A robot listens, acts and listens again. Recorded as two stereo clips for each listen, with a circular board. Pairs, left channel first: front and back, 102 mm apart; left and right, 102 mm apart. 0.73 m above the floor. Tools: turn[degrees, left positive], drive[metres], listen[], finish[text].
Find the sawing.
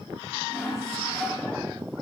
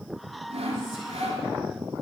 Thought: The sawing: 70° right.
Action: turn[-70]
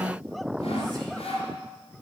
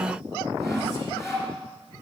Thought: The sawing is now 25° left.
Action: turn[25]
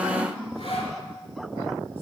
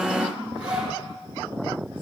Thought: The sawing is now 10° right.
Action: turn[-10]
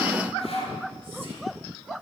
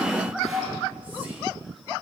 Action: finish[Found it: sawing, straight ahead, 2 to 4 m away.]